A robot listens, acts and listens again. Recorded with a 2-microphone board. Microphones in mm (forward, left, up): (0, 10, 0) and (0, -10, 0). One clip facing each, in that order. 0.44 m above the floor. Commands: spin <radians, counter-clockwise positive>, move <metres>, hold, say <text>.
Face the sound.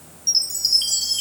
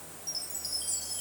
spin 1.13
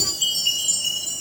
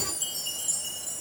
spin 0.79
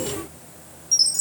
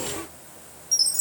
spin 0.26
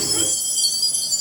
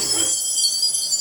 say Facing the chime.